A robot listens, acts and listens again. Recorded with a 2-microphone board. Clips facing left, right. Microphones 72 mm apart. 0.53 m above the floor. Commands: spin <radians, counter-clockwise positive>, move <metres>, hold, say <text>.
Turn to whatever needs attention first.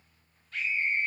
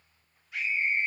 spin -0.52
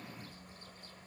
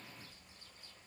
hold
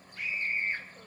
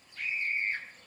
spin 0.26
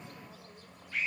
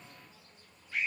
say Found it: a scream, straight ahead, 2 to 4 m away.